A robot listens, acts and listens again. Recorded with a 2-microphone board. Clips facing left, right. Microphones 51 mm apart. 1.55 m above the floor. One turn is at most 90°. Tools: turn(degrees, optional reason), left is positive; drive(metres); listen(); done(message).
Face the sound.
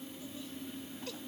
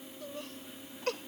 turn(degrees=-60, reason="The laughter: about 60° right or 120° right.")
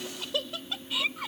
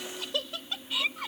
done("Found it: laughter, straight ahead.")